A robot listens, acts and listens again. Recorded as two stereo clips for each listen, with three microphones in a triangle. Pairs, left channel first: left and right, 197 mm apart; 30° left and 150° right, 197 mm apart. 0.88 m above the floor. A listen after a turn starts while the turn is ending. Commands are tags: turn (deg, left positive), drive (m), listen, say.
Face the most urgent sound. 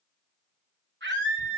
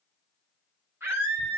<turn deg="-70"/>
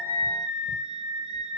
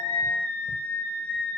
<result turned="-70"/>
<say>Found it: a scream, straight ahead, over 4 m away.</say>